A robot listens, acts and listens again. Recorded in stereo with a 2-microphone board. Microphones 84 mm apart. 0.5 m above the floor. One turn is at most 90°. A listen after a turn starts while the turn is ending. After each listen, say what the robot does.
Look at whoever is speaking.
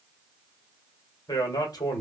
Turn 50° left.
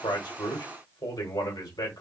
Turn 65° left.
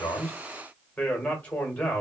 Turn 20° left.
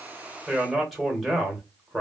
Found it: a man speaking, straight ahead.